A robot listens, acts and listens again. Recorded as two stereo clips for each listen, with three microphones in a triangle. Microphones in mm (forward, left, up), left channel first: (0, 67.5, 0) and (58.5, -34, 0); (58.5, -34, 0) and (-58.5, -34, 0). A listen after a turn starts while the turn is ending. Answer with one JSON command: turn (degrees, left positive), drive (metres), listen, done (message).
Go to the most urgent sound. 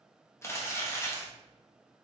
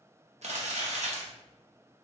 {"listen": true}
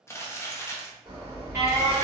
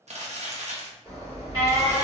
{"turn": -125}
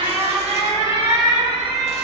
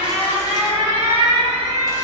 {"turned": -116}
{"turn": -10}
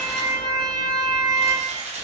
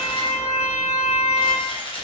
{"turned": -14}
{"drive": 1.0}
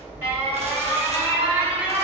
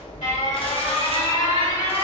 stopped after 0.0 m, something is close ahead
{"turn": 10}
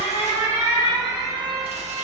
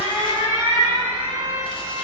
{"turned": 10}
{"done": "Something is in my way. I am facing the alarm but have not reached it."}